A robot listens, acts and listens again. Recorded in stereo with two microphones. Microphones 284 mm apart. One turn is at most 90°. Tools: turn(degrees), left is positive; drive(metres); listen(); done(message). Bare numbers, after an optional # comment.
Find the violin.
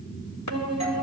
# The violin: about 55° right or 125° right.
turn(-55)
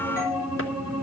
done("Found it: a violin, straight ahead, over 4 m away.")